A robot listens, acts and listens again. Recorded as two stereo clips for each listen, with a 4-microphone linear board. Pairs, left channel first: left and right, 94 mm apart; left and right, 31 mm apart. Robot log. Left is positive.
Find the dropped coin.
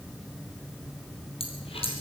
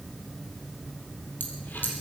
cmd idle
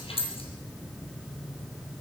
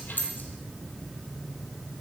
cmd yaw +90
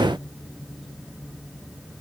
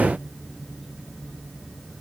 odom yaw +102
note: Nothing new. It was at 10° right.
cmd yaw -10
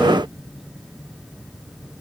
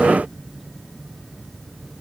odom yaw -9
end: I heard a dropped coin from this way, but can't make it out now.